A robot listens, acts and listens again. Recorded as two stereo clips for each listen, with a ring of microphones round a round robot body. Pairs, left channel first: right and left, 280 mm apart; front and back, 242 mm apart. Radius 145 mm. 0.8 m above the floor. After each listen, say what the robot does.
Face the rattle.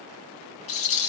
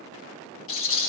Turn 50° right.
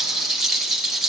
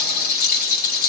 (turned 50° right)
Facing the rattle.